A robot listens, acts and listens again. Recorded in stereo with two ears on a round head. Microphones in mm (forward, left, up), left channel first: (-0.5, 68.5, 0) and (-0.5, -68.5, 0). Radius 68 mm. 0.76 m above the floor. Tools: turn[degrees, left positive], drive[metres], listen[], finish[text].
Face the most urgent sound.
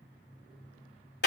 Action: listen[]
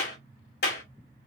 Action: listen[]
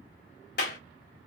Action: finish[I can't make out anything urgent, only a clap.]